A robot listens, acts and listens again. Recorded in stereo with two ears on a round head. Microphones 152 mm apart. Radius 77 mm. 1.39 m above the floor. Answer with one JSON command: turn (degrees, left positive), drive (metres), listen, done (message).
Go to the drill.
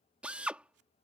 {"turn": -30}
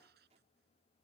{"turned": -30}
{"listen": true}
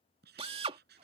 {"turn": -145}
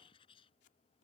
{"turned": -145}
{"listen": true}
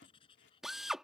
{"drive": 1.0}
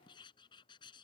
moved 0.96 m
{"listen": true}
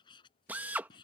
{"turn": -10}
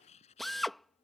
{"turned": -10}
{"drive": 1.0}
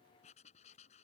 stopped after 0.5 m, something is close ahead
{"listen": true}
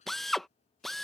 {"done": "I am next to the drill."}